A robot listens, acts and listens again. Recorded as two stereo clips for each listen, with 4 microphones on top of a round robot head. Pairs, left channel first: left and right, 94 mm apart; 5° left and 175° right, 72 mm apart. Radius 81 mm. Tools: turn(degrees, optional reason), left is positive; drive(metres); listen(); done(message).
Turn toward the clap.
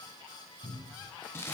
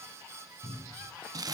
listen()
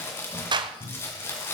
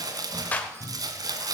turn(degrees=-65, reason="The clap: 65° right.")
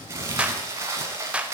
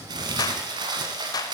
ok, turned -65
turn(degrees=-15, reason="The clap is now 15° right.")
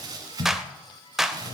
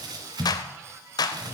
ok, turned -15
done("Found it: a clap, straight ahead.")